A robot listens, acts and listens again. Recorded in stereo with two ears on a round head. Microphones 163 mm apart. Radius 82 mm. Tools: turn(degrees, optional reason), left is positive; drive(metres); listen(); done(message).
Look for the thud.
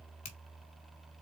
listen()
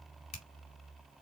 listen()
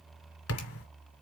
turn(degrees=70, reason="The thud: about 70° left or 110° left.")
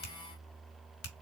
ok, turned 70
listen()
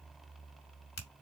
done("I heard a thud, but can't make it out now. It was about straight ahead or 40° left.")